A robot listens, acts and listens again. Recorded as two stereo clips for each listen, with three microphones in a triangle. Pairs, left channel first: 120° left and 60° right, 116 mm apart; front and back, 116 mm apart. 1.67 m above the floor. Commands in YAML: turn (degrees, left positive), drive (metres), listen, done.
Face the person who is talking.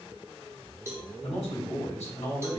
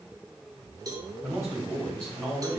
turn: 115
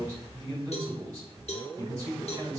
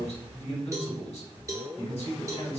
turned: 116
done: "Facing the man speaking, 2 to 4 m away."